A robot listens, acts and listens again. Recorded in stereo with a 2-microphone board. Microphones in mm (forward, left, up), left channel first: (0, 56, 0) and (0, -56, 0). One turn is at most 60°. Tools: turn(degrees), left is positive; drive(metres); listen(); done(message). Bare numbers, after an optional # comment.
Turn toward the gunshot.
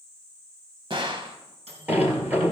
# The gunshot: about 50° right or 130° right.
turn(-50)
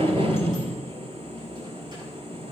listen()
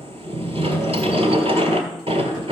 done("I heard a gunshot, but can't make it out now. It was about straight ahead or 80° right.")